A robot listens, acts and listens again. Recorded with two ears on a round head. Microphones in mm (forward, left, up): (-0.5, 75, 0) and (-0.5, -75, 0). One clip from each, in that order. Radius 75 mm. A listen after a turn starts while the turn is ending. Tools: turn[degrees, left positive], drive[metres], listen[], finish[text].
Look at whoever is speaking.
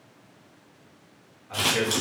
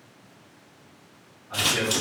Thought: The man speaking: about 70° left or 110° left.
Action: turn[70]
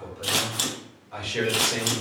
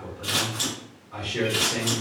Thought: So it is at 35° left.
Action: turn[35]
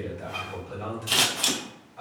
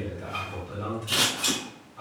Thought: The man speaking is now 15° left.
Action: turn[15]
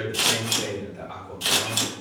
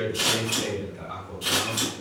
Action: finish[Facing the man speaking.]